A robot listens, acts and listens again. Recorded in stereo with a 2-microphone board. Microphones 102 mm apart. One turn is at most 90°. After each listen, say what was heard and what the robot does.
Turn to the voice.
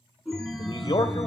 The man speaking: about 50° left or 130° left. Turn 50° left.
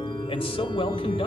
So it is at 75° left. Turn 75° left.
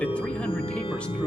The man speaking is now 10° left. Turn 10° left.
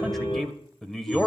Facing the man speaking, 1 to 2 m away.